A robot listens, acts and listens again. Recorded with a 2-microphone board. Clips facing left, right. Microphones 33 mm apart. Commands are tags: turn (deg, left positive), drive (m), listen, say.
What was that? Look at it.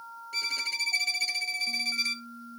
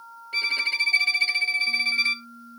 <turn deg="-35"/>
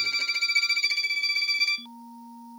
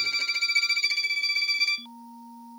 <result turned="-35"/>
<say>Facing the violin.</say>